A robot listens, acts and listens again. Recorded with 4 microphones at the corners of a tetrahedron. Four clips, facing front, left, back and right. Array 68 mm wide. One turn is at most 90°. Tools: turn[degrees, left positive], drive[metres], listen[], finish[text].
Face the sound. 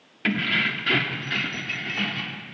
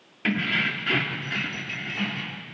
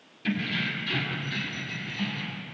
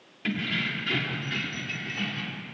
Action: finish[Found it: keys jangling, straight ahead, 2 to 4 m away.]